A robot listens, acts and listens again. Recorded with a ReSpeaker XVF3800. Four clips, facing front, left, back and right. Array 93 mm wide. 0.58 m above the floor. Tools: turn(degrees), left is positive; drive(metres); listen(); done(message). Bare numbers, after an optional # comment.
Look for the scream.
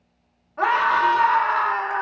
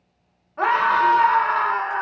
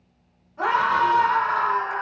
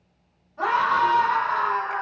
# The scream: 50° left.
turn(50)
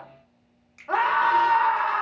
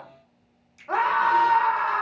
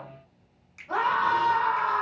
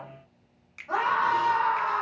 # The scream is now 35° left.
turn(35)
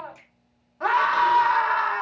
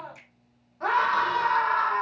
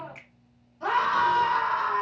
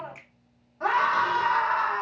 # The scream is now 10° right.
turn(-10)
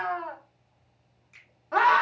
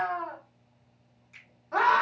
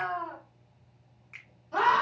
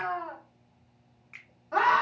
done("Facing the scream.")